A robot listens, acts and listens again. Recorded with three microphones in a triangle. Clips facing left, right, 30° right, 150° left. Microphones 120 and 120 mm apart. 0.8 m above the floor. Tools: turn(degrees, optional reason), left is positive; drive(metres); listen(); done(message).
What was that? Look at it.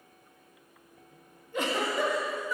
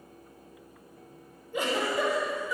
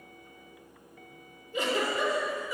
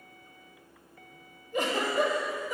turn(degrees=-170, reason="The giggle: 170° right.")
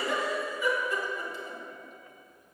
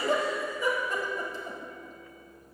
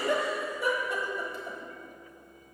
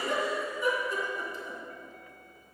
turn(degrees=-40, reason="The giggle is now 40° right.")
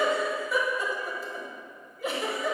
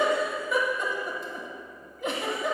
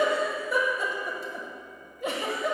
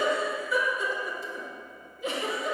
done("Facing the giggle.")